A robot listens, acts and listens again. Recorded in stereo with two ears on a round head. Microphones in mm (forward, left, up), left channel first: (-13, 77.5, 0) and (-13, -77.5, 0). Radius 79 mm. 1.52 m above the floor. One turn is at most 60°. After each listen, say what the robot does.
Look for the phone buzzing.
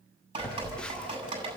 Turn 30° left.
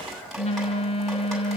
Turn 60° left.
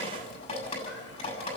Turn 60° left.
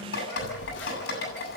Turn 60° left.
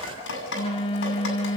Turn 30° left.
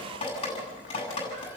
Keep listening.
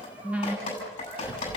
Facing the phone buzzing, 1 to 2 m away.